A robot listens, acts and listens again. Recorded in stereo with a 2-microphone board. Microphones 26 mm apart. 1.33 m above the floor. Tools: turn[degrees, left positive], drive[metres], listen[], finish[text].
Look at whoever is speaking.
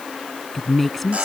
Action: turn[30]
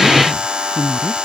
Thought: So it is at 20° right.
Action: turn[-20]
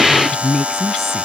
Action: finish[Found it: a woman speaking, straight ahead.]